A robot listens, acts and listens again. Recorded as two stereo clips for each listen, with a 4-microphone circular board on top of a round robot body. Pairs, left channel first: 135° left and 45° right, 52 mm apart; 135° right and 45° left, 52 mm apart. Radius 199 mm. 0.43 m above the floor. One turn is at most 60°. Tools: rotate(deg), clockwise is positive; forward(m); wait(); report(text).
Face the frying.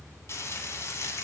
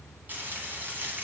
rotate(-60)
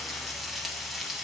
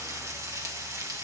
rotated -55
rotate(-45)
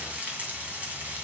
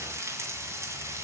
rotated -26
rotate(-20)
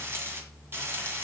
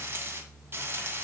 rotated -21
report("Found it: frying, straight ahead.")